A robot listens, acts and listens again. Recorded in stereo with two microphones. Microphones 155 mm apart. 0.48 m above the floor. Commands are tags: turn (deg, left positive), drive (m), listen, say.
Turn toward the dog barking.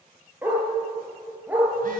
<turn deg="-30"/>
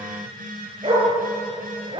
<turn deg="-150"/>
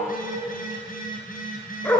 <turn deg="15"/>
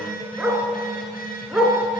<say>Facing the dog barking.</say>